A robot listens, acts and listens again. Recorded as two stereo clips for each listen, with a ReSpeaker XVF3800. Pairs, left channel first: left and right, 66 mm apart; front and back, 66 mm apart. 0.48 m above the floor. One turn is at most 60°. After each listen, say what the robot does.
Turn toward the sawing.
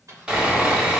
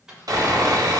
Turn 60° right.
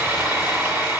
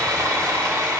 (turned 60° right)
Turn 60° right.
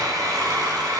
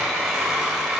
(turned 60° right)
Turn 60° right.
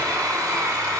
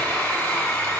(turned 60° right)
Turn 60° right.
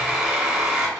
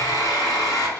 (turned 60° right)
Turn 10° right.
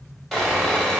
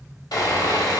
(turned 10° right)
Facing the sawing, 1 to 2 m away.